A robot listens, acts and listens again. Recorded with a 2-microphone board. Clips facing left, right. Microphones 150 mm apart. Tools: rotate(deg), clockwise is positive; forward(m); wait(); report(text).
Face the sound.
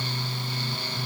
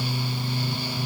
wait()
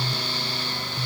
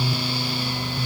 wait()
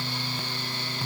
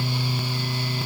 report("I can't make out anything.")